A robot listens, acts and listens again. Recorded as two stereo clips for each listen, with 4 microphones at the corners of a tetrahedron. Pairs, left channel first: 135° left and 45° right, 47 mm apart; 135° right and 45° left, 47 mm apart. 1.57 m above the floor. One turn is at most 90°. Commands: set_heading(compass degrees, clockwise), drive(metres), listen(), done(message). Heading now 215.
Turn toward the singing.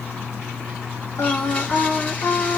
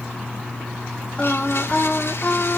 set_heading(125)
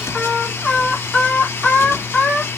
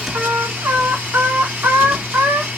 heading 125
set_heading(70)
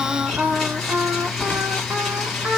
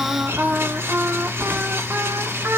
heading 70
set_heading(60)
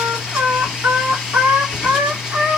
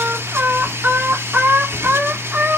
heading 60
done("Facing the singing, 2 to 4 m away.")